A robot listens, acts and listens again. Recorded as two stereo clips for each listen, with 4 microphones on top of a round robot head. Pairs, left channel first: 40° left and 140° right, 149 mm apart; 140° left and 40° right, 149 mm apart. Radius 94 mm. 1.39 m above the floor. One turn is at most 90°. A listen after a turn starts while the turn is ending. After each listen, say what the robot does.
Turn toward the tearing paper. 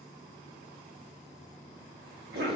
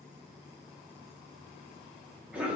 Keep listening.
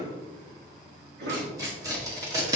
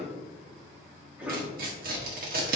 Turn 70° right.
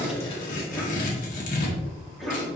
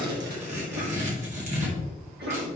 Found it: tearing paper, straight ahead, 1 to 2 m away.